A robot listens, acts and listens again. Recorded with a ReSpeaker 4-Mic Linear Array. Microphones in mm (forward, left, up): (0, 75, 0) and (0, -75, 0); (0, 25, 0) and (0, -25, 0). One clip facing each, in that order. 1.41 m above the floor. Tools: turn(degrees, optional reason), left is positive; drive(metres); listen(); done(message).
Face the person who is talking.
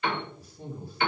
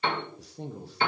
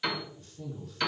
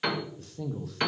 turn(degrees=-90)
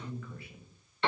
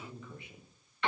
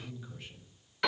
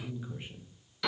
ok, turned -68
turn(degrees=-20, reason="So it is at 20° right.")
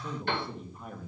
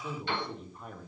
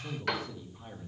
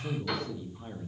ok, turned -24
done("Found it: a man speaking, straight ahead.")